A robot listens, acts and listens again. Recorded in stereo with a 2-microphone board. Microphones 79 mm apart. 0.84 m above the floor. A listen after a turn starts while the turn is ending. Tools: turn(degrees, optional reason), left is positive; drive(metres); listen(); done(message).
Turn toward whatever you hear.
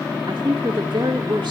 turn(degrees=-90)
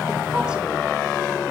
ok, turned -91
listen()
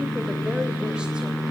listen()
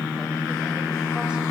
done("Facing where the woman speaking came from. I can't hear it now.")